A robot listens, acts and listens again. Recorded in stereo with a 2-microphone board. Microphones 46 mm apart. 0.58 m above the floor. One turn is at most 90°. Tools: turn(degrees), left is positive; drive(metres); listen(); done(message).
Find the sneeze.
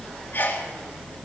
turn(degrees=40)
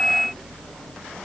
listen()
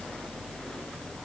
done("I heard a sneeze, but can't make it out now. It was about straight ahead or 100° left.")